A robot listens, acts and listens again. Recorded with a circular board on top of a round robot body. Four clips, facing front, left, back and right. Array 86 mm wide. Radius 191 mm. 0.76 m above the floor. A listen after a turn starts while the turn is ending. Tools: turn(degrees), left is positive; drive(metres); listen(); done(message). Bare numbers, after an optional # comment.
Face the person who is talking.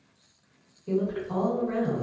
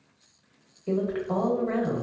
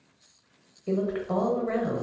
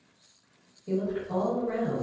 # The woman speaking: 135° left.
turn(135)
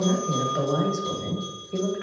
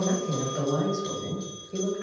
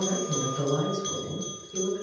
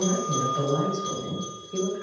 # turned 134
done("Facing the woman speaking, 1 to 2 m away.")